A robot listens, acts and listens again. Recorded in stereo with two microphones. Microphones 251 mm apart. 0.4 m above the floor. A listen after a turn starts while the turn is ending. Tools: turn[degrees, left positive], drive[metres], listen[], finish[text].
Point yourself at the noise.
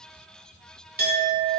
Thought: The clink: about 35° right or 145° right.
Action: turn[-35]
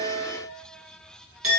Thought: So it is at 105° right.
Action: turn[-105]
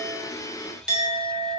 Action: finish[Facing the clink.]